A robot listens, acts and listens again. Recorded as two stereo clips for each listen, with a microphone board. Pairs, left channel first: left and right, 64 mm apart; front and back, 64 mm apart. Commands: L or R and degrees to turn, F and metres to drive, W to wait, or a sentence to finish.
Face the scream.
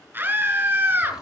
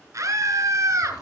R145
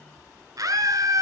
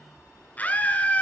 R65
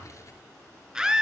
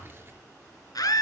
R10
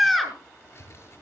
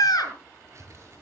Found it: a scream, straight ahead, over 4 m away.